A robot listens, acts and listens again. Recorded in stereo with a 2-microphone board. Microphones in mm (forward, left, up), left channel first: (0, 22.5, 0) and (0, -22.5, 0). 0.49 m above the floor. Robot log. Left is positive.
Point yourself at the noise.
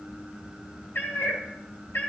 note: The cat meowing: about 65° left or 115° left.
cmd yaw +65
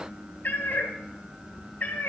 note: So it is at 45° left.
cmd yaw +45
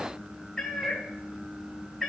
end: Found it: a cat meowing, straight ahead.